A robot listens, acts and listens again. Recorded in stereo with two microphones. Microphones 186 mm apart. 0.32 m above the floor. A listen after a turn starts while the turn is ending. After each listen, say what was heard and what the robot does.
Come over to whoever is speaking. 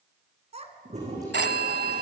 The child speaking: about 35° right or 145° right. Turn 35° right.
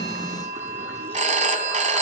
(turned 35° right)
Keep listening.
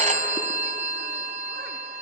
Keep listening.
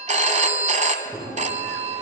I heard a child speaking, but can't make it out now. It was about straight ahead or 110° right. I did not reach it.